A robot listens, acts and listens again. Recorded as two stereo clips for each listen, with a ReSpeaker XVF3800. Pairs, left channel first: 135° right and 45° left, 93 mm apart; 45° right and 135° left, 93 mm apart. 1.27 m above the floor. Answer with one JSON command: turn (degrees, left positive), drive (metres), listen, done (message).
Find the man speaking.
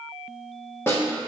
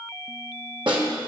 {"listen": true}
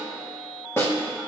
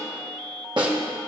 {"listen": true}
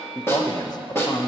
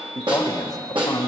{"turn": -95}
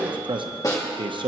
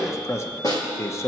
{"turn": 15}
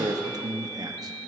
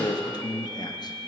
{"done": "Facing the man speaking, under 1 m away."}